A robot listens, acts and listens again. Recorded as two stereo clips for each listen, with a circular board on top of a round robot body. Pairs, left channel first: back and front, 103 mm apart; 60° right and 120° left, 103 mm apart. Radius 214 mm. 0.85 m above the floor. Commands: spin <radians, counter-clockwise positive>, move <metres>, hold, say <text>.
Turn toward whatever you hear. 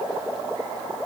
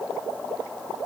hold
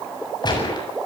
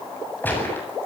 spin -2.36
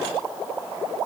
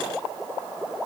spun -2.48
spin 0.17
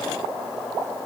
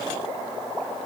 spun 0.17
say Facing where the gunshot came from. I can't hear it now.